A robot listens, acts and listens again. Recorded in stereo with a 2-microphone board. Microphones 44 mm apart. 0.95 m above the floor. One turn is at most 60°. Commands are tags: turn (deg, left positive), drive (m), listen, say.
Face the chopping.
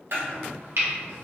<turn deg="-60"/>
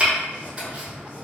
<turn deg="-25"/>
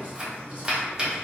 <turn deg="-20"/>
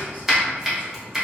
<say>Facing the chopping, under 1 m away.</say>